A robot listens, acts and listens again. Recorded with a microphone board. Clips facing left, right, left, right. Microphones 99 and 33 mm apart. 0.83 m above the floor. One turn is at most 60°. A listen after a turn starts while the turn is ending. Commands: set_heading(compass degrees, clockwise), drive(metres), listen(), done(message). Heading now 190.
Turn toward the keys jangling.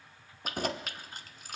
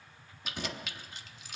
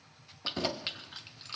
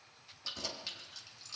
set_heading(145)
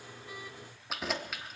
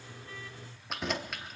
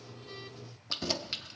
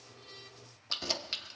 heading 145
done("Found it: keys jangling, straight ahead, under 1 m away.")